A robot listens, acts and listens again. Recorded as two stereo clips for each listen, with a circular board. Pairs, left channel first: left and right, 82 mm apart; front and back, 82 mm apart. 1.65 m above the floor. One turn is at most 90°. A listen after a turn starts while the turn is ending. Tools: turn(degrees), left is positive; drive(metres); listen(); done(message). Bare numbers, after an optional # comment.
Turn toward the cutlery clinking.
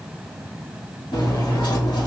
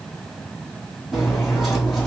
# The cutlery clinking: 90° left.
turn(90)
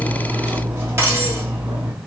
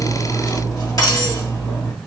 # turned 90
# The cutlery clinking is now 35° right.
turn(-35)
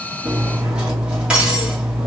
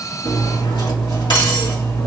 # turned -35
# The cutlery clinking is now 15° right.
turn(-15)
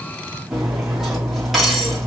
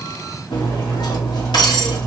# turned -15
done("Found it: cutlery clinking, straight ahead, 2 to 4 m away.")